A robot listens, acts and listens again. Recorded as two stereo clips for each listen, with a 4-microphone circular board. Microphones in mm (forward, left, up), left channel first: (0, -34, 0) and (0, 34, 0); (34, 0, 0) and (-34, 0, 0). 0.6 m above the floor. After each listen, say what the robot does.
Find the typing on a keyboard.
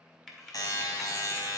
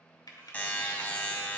Found it: typing on a keyboard, straight ahead.